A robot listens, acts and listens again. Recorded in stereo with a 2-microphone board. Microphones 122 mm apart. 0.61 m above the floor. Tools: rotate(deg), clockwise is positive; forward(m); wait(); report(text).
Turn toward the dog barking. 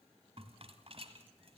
wait()
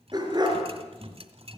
rotate(35)
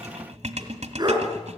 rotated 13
rotate(35)
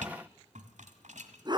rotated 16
rotate(35)
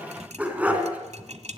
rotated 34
rotate(10)
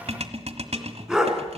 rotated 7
report("Found it: a dog barking, straight ahead, 2 to 4 m away.")